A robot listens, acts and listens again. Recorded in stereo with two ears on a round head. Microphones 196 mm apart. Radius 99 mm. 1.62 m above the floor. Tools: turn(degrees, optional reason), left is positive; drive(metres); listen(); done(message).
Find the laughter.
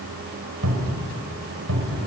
listen()
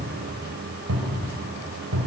listen()
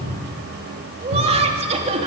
turn(degrees=-30, reason="The laughter: about 30° right or 150° right.")
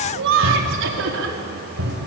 turn(degrees=-115, reason="So it is at 115° right.")
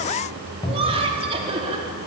turn(degrees=-25, reason="The laughter is now 25° right.")
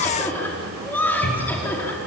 turn(degrees=10, reason="The laughter is now 10° left.")
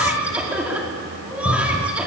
done("Facing the laughter.")